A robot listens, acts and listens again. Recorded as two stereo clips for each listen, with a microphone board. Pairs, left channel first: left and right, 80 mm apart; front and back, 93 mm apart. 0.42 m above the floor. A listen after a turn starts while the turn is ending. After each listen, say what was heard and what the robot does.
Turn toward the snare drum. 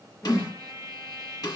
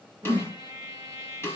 The snare drum: 60° left. Turn 60° left.
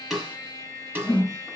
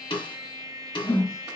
The snare drum is now 25° right. Turn 25° right.
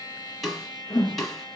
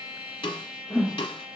Found it: a snare drum, straight ahead, 1 to 2 m away.